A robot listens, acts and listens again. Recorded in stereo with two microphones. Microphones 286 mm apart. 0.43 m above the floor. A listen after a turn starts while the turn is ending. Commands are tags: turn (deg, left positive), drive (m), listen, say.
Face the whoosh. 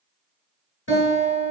<listen/>
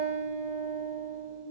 <listen/>
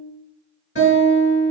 <say>I can't make out a whoosh to turn to.</say>